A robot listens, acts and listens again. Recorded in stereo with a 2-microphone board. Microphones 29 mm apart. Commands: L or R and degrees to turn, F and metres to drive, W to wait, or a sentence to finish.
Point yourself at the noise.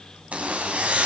R50
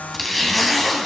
Found it: a zipper, straight ahead.